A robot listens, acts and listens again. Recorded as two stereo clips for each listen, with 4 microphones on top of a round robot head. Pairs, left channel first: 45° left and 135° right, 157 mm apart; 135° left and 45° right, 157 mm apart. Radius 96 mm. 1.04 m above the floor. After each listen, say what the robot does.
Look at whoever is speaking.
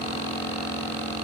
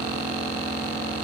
Keep listening.
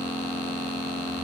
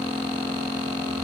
Keep listening.
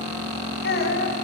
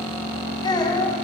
Turn 70° left.
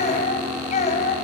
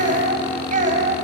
Facing the child speaking.